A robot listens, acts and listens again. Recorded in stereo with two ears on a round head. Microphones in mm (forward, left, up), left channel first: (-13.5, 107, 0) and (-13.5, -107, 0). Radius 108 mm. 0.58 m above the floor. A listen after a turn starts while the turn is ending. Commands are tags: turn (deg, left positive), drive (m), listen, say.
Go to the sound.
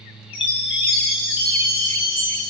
<turn deg="20"/>
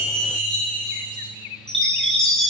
<drive m="1.0"/>
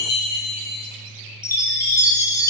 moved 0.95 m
<turn deg="15"/>
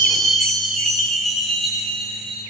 <drive m="1.0"/>
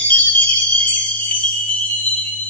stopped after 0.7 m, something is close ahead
<say>I am next to the chime.</say>